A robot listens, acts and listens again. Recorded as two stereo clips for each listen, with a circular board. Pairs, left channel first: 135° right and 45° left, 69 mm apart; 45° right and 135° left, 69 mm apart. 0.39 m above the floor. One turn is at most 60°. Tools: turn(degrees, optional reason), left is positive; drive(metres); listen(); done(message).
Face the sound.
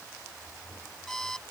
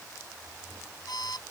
turn(degrees=-50, reason="The alarm clock: 50° right.")
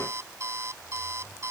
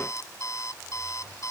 done("Facing the alarm clock.")